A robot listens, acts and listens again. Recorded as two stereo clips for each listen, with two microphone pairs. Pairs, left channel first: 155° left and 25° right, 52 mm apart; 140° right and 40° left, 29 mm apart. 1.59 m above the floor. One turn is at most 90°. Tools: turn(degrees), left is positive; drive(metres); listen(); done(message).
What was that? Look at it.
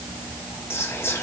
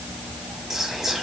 turn(degrees=90)
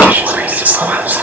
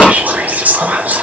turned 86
turn(degrees=30)
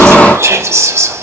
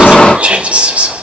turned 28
done("Facing the whispering, under 1 m away.")